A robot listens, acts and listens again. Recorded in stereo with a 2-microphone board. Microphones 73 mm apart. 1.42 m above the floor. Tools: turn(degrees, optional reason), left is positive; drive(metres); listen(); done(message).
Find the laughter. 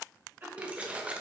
turn(degrees=-25, reason="The laughter: about 25° right or 155° right.")
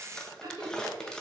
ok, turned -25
turn(degrees=-120, reason="So it is at 120° right.")
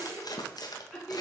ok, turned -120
done("Facing the laughter, 2 to 4 m away.")